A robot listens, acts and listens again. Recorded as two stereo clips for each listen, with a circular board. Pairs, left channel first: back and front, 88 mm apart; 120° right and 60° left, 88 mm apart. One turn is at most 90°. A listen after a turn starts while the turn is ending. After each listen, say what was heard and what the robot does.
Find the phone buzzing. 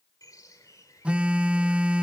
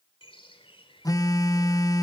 The phone buzzing: 75° right. Turn 75° right.
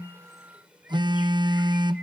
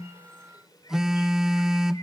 The phone buzzing is now 25° right. Turn 25° right.
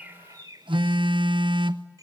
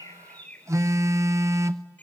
Found it: a phone buzzing, straight ahead.